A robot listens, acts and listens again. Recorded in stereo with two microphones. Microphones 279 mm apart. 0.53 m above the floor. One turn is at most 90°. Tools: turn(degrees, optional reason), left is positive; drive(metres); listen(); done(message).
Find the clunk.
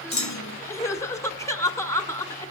turn(degrees=90)
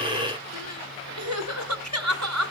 done("I heard a clunk from this way, but can't make it out now.")